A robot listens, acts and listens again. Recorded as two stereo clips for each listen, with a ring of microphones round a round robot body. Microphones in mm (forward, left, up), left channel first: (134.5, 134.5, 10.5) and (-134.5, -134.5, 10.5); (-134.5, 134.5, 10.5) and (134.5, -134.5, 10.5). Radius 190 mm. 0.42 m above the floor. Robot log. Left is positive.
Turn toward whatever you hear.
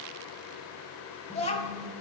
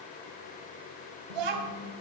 note: The child speaking: 30° right.
cmd yaw -30
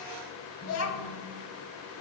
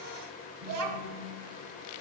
end: Facing the child speaking, 2 to 4 m away.